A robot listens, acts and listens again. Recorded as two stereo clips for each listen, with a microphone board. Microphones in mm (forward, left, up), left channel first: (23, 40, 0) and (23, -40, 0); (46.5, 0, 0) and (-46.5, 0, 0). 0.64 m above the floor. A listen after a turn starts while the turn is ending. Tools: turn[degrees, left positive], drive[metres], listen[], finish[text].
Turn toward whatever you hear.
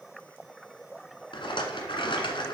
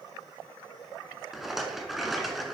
Thought: The rattle: 95° left.
Action: turn[95]
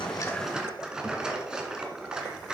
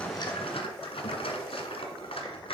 Thought: The rattle is now 10° right.
Action: turn[-10]
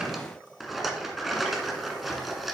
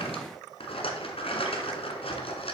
Action: finish[Found it: a rattle, straight ahead, 1 to 2 m away.]